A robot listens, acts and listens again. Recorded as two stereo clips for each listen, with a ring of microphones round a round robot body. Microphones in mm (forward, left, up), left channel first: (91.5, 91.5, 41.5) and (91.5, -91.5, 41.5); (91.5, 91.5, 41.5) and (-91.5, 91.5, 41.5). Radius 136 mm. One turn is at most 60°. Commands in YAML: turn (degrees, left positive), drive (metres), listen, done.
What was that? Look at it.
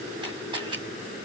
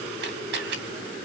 turn: -60
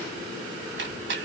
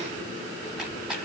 turn: -60
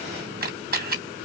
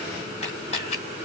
turn: -60
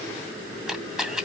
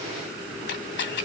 done: "Found it: a camera shutter, straight ahead, 2 to 4 m away."